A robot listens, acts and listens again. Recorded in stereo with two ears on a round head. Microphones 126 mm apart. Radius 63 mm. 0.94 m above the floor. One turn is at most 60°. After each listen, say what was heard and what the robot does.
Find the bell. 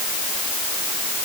Keep listening.
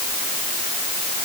Keep listening.
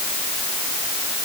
I can't make out a bell to turn to.